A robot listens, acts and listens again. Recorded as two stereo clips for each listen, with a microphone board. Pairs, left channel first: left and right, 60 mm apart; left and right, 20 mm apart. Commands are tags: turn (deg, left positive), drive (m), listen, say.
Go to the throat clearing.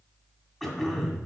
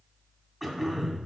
<turn deg="30"/>
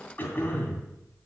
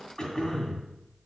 <turn deg="150"/>
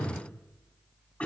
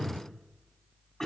<turn deg="25"/>
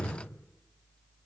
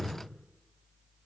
<drive m="1.0"/>
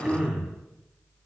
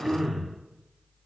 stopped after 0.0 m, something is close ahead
<turn deg="-10"/>
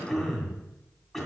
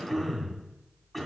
<say>Blocked. The throat clearing is further on, straight ahead.</say>